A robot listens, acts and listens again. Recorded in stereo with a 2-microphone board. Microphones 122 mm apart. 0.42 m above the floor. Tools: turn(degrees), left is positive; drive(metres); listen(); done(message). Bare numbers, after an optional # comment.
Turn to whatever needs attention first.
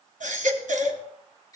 turn(-90)
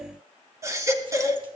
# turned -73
# So it is at 25° right.
turn(-25)
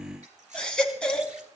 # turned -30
done("Facing the baby crying, 1 to 2 m away.")